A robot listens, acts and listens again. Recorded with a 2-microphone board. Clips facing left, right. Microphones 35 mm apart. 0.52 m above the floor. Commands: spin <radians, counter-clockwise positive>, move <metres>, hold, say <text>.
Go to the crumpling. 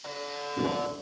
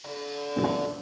spin -1.05
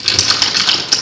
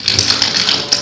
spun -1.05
move 1.0
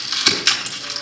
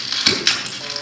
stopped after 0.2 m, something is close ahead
spin -0.17
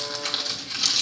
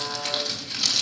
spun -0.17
say Blocked. The crumpling is further on, straight ahead.